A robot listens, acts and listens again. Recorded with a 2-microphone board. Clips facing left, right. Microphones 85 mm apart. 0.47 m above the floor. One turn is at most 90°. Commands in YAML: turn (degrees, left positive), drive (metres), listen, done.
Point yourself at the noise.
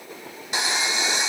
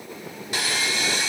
turn: 20
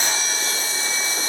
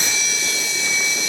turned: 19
turn: 90
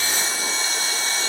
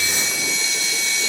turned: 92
turn: 45
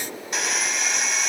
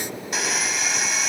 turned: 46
done: "Facing the sawing."